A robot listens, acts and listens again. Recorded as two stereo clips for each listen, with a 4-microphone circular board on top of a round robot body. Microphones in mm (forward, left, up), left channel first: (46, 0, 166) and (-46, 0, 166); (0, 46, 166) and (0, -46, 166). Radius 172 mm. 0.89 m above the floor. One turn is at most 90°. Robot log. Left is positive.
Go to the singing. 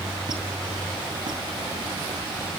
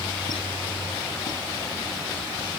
cmd idle
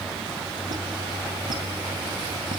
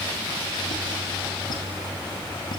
cmd idle
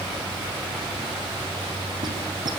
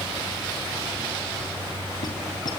end: I can't make out singing to turn to.